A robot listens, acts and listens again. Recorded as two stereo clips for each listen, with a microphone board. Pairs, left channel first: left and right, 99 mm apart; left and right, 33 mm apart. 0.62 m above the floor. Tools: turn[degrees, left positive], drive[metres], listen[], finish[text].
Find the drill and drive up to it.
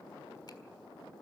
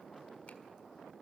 Action: listen[]
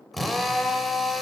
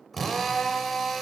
Action: turn[30]
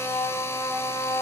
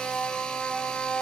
Thought: So it is at 150° left.
Action: turn[150]
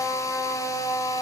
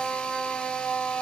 Thought: The drill is now 35° left.
Action: turn[35]
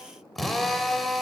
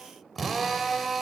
Action: drive[1.0]
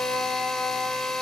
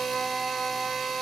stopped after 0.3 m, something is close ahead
Action: finish[Blocked. The drill is further on, straight ahead.]